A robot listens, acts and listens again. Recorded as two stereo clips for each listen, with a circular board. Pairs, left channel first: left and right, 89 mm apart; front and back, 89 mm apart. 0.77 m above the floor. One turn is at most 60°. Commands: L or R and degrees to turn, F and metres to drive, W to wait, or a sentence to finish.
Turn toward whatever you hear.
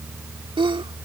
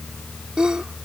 R60
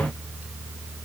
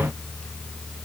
R40
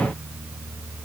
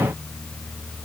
Facing where the sneeze came from. I can't hear it now.